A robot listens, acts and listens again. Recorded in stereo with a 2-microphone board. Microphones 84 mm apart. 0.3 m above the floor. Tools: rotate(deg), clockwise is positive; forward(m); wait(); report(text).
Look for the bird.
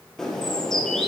rotate(-30)
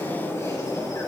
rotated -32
rotate(-140)
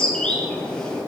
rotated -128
rotate(-10)
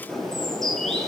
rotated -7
report("Found it: a bird, straight ahead.")